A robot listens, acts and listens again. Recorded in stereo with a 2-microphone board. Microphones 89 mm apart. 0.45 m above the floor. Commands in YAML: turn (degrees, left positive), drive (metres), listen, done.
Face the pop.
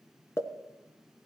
turn: 30
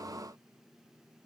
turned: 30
listen: true
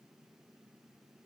done: "I heard a pop, but can't make it out now. It was about straight ahead or 120° left."